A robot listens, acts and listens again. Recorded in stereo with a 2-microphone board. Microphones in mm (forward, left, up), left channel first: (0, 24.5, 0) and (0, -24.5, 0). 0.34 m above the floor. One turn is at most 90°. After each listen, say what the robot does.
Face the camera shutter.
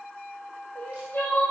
Keep listening.
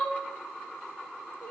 Keep listening.
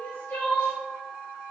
I can't make out a camera shutter, only crying.